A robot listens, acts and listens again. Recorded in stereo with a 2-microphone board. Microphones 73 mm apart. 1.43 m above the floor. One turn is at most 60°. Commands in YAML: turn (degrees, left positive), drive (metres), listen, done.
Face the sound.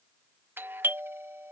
turn: -30
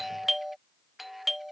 done: "Found it: a doorbell, straight ahead."